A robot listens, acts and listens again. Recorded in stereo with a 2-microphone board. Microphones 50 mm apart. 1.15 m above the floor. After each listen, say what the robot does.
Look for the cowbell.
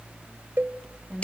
Turn 45° right.
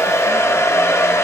Keep listening.
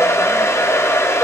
Keep listening.
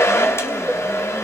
I heard a cowbell, but can't make it out now. It was about straight ahead or 90° right.